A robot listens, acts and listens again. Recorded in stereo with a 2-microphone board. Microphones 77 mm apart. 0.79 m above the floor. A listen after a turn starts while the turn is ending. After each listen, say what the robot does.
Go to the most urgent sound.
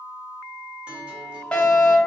Turn 30° left.
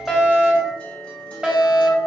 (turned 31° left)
Turn 15° right.
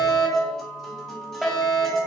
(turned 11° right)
Drive 1.0 m forward.
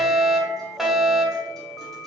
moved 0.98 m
Turn 10° right.
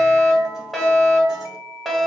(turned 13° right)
Drive 1.0 m forward.
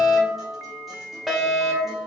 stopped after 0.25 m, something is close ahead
I am next to the fire alarm.